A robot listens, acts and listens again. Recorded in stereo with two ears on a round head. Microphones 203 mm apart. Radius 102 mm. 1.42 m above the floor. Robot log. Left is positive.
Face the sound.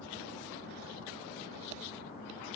cmd idle
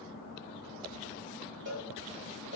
note: The cowbell: about 35° right or 145° right.
cmd yaw -35
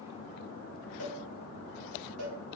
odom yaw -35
note: So it is at 105° right.
cmd yaw -105
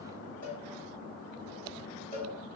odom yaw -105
note: The cowbell is now 10° left.
cmd yaw +10
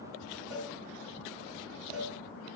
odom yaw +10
end: Facing the cowbell.